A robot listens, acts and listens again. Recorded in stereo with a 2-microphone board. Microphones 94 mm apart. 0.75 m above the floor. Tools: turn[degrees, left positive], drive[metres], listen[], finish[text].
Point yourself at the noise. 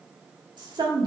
Thought: The woman speaking: about 55° right or 125° right.
Action: turn[-55]
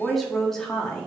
Thought: So it is at 10° left.
Action: turn[10]
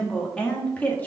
Thought: The woman speaking is now 15° left.
Action: turn[15]
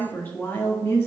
Thought: The woman speaking is now 30° left.
Action: turn[30]
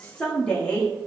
Thought: The woman speaking is now 15° left.
Action: turn[15]
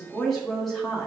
Action: finish[Facing the woman speaking.]